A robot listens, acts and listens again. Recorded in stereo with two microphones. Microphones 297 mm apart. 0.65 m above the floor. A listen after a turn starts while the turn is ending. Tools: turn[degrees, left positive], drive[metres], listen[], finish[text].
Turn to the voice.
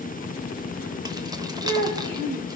Action: turn[-90]
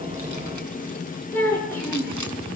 Action: finish[Facing the child speaking.]